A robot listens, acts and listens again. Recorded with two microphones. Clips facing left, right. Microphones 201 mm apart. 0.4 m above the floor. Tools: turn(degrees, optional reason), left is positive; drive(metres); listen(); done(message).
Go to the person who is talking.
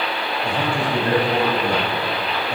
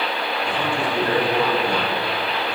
turn(degrees=40, reason="The man speaking: about 40° left or 140° left.")
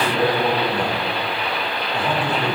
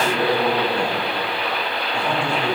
drive(metres=1.0)
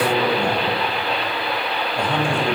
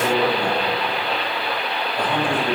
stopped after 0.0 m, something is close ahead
turn(degrees=10, reason="The man speaking is now 10° left.")
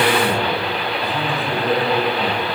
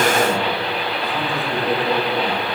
done("Blocked. The man speaking is further on, straight ahead.")